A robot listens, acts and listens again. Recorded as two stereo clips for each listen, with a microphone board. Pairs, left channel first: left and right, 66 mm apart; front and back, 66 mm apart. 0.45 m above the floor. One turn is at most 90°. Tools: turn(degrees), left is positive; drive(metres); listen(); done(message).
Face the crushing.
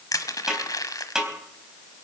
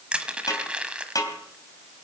turn(degrees=90)
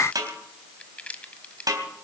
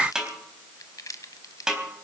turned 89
turn(degrees=20)
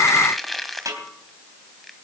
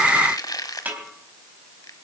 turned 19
done("Found it: crushing, straight ahead, 1 to 2 m away.")